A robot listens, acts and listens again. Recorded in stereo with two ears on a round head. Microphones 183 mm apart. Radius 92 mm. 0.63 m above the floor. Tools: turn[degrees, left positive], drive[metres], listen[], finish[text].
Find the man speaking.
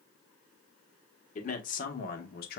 Thought: The man speaking: about 50° left or 130° left.
Action: turn[50]
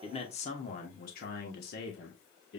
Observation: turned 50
Thought: So it is at 60° left.
Action: turn[60]
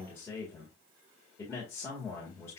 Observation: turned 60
Thought: The man speaking is now 10° left.
Action: turn[10]
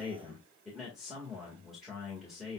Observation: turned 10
Action: finish[Facing the man speaking, 1 to 2 m away.]